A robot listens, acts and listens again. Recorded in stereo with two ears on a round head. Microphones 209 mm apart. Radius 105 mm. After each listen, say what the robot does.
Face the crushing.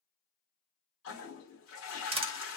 Turn 25° right.
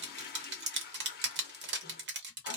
Turn 130° right.
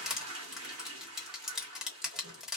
Facing the crushing.